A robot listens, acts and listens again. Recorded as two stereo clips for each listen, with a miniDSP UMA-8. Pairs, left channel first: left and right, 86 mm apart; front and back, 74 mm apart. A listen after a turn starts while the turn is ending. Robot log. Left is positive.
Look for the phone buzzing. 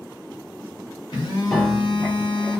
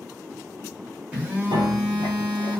note: The phone buzzing: 115° left.
cmd yaw +115
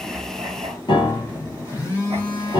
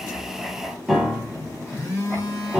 note: The phone buzzing is now 35° left.
cmd yaw +35
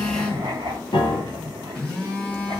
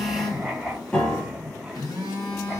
note: The phone buzzing is now 10° left.
cmd yaw +10
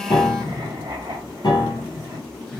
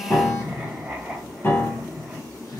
end: Facing the phone buzzing.